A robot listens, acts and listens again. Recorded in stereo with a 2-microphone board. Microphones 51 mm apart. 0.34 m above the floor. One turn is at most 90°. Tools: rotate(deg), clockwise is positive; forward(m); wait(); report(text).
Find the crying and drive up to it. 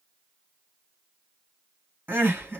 rotate(45)
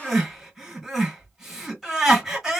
forward(1.0)
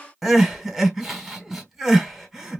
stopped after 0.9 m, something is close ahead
report("Arrived at the crying, straight ahead.")